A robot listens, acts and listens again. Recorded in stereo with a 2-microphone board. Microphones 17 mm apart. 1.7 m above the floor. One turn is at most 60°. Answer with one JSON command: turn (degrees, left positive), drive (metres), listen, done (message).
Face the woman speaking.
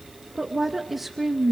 {"turn": 30}
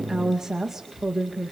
{"turn": -30}
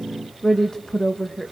{"turn": 45}
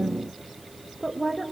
{"turn": 20}
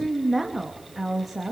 {"done": "Facing the woman speaking, 2 to 4 m away."}